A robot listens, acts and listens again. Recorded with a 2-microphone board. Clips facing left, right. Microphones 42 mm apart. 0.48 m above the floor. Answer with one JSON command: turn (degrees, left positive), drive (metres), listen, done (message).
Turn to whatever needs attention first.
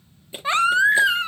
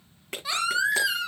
{"turn": 35}
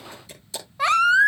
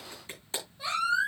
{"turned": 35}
{"turn": 105}
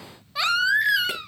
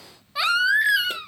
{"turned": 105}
{"done": "Facing the baby crying, 1 to 2 m away."}